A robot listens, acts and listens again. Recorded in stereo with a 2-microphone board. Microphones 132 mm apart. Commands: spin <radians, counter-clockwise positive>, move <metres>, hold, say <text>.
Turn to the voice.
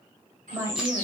spin -0.44
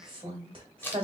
spin -2.18
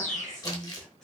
say Facing the woman speaking.